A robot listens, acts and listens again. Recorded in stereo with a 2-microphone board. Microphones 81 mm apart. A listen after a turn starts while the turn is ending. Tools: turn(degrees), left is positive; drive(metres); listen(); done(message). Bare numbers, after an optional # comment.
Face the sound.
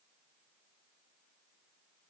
listen()
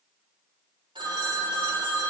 turn(-90)
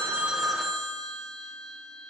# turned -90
done("Facing the phone ringing, 1 to 2 m away.")